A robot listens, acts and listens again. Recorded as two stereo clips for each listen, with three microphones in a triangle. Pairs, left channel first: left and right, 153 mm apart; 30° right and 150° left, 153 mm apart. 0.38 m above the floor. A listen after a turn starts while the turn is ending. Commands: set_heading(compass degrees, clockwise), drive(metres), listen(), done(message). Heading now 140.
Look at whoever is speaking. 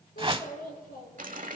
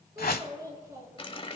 set_heading(55)
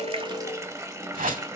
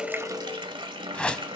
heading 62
listen()
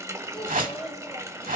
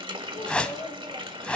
done("Found it: a child speaking, straight ahead.")